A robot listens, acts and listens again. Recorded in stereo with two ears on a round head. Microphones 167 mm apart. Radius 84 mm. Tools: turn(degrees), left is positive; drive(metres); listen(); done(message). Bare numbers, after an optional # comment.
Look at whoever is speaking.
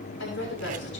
# The woman speaking: about 70° left or 110° left.
turn(70)
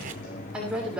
done("Facing the woman speaking, over 4 m away.")